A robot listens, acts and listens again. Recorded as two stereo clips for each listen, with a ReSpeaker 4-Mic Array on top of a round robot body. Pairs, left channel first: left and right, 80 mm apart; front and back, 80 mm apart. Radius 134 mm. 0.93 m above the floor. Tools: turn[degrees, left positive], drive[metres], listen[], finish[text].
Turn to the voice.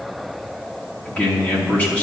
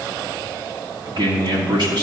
Thought: The man speaking: 160° left.
Action: turn[160]
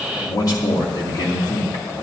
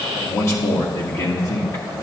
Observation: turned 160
Thought: The man speaking is now 50° left.
Action: turn[50]
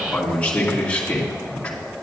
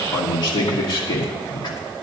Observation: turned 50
Thought: The man speaking is now 15° left.
Action: turn[15]
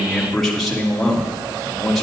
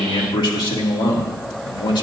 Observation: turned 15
Action: finish[Found it: a man speaking, straight ahead.]